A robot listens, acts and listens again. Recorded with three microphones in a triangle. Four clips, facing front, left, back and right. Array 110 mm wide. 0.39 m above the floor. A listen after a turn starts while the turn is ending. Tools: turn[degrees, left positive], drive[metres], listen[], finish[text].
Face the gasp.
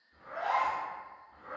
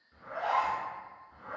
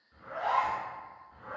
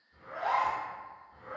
Thought: The gasp: 135° right.
Action: turn[-135]
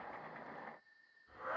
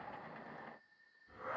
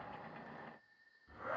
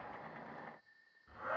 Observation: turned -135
Action: finish[Facing where the gasp came from. I can't hear it now.]